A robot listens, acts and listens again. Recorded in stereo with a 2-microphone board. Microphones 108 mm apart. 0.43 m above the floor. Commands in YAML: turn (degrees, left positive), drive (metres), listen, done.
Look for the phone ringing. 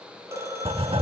turn: -25
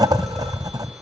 listen: true
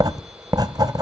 listen: true
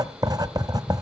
done: "I heard a phone ringing, but can't make it out now. It was about straight ahead or 130° right."